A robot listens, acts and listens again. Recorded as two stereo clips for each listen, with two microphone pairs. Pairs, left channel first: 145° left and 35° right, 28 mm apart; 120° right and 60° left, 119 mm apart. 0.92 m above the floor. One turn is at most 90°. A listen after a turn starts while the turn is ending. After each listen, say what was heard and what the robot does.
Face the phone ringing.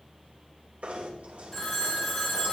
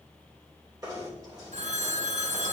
The phone ringing: 70° left. Turn 70° left.
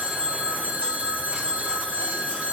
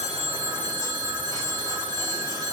The phone ringing is now 10° left. Turn 10° left.
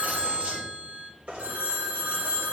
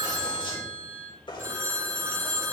Found it: a phone ringing, straight ahead.